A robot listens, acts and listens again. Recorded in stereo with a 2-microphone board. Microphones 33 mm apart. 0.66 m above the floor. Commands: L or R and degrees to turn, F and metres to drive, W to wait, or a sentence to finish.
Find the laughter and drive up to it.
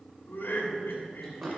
L70
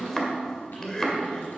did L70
L25
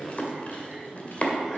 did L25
W
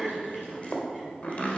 F1.0
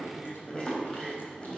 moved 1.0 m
F1.0
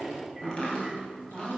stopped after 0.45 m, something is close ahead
W
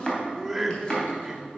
Arrived at the laughter, straight ahead.